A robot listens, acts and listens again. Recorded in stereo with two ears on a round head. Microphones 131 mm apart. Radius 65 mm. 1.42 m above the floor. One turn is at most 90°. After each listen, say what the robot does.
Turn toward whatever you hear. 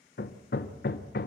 Turn 70° left.
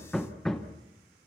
Found it: hammering, straight ahead, 1 to 2 m away.